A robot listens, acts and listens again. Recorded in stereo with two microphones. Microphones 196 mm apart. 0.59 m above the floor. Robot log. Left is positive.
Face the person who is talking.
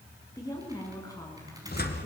note: The woman speaking: about 20° left or 160° left.
cmd yaw +20
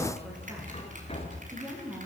end: Found it: a woman speaking, straight ahead.